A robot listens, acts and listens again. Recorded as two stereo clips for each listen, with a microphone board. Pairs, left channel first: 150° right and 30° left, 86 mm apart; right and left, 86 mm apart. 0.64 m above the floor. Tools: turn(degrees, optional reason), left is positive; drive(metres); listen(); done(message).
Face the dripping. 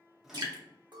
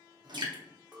turn(degrees=65, reason="The dripping: 65° left.")
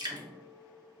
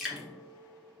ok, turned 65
done("Facing the dripping, under 1 m away.")